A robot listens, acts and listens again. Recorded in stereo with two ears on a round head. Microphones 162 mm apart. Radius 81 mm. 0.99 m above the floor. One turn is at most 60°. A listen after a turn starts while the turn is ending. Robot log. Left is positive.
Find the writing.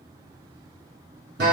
cmd idle
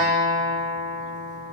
cmd idle
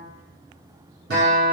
end: I can't make out writing to turn to.